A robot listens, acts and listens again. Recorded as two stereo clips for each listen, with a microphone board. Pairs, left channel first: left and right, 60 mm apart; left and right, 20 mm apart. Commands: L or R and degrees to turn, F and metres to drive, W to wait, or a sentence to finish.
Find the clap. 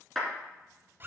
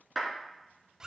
L30
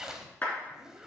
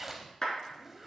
L150
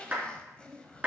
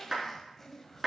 R25
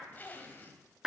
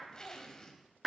R10
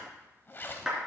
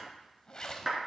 Found it: a clap, straight ahead, 2 to 4 m away.